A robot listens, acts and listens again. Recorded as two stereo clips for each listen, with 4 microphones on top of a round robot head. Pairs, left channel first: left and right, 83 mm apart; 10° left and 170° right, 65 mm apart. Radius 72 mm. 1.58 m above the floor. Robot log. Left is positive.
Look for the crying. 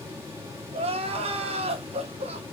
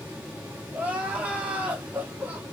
note: The crying: 95° right.
cmd yaw -95
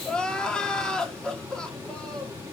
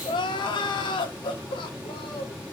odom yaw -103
note: The crying is now 10° left.
cmd yaw +10
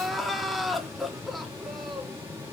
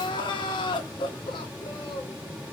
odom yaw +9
end: Found it: crying, straight ahead.